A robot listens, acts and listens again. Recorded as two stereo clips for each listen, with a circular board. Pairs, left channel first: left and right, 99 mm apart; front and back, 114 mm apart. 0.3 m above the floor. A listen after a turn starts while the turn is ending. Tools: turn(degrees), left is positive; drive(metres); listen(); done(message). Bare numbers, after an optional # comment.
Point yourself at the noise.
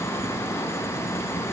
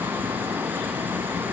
listen()
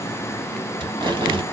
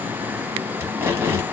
# The tape being pulled: 115° right.
turn(-115)
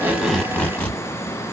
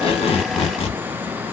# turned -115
# The tape being pulled is now 20° left.
turn(20)
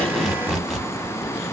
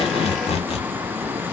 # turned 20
done("Found it: tape being pulled, straight ahead, 1 to 2 m away.")